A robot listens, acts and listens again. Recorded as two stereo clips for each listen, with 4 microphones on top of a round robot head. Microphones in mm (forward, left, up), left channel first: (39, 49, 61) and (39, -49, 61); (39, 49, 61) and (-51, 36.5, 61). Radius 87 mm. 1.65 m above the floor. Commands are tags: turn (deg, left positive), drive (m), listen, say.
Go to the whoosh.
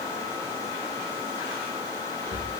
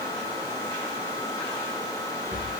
<listen/>
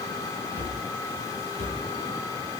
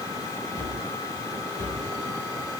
<listen/>
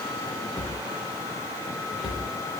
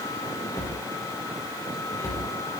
<say>I can't make out a whoosh to turn to.</say>